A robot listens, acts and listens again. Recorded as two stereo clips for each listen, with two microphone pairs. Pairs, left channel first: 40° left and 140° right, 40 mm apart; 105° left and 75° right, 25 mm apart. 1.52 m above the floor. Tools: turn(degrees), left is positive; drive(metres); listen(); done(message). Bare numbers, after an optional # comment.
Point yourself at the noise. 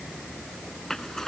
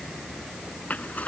# The zipper: 120° left.
turn(120)
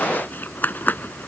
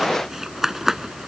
done("Facing the zipper.")